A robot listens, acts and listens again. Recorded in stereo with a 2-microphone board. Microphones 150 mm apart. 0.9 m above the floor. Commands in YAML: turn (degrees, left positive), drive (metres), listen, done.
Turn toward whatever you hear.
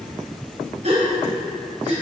turn: -50
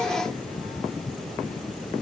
listen: true
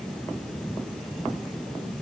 done: "I heard a gasp, but can't make it out now. It was about straight ahead or 80° right."